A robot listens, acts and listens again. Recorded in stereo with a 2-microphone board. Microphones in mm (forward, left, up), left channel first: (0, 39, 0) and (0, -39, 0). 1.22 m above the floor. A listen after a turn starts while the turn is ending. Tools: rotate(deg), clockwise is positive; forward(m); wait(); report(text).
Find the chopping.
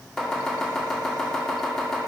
rotate(-30)
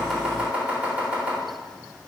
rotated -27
rotate(20)
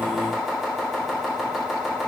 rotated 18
report("Facing the chopping.")